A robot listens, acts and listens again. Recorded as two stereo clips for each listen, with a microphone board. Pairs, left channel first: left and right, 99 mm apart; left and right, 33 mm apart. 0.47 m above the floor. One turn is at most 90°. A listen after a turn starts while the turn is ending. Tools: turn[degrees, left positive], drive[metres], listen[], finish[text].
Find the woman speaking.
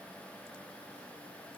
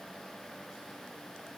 Action: listen[]
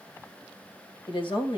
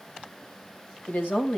Thought: The woman speaking: about 60° left or 120° left.
Action: turn[60]
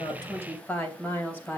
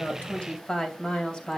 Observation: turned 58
Thought: So it is at 20° left.
Action: turn[20]
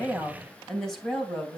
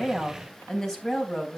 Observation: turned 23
Action: finish[Found it: a woman speaking, straight ahead, 2 to 4 m away.]